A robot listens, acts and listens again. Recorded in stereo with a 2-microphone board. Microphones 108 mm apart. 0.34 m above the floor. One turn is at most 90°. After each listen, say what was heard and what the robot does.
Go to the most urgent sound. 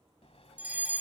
Turn 30° right.
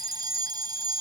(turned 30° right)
So it is at 135° right. Turn 90° right.
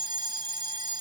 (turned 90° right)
The fire alarm is now 55° right. Turn 55° right.
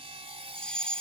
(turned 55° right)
The fire alarm is now 10° left. Turn 10° left.
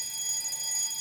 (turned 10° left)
Drive 1.0 m forward.
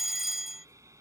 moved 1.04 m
Drive 1.0 m forward.
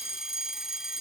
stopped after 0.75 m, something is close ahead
The fire alarm is now 10° right. Turn 10° right.
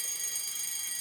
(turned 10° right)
Arrived at the fire alarm, straight ahead.